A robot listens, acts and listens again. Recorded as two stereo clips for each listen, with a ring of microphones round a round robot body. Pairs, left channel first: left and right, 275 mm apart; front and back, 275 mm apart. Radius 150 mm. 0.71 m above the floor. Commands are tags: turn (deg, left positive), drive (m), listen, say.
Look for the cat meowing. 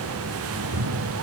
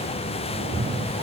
<turn deg="-120"/>
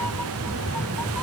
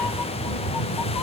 <say>Facing the cat meowing.</say>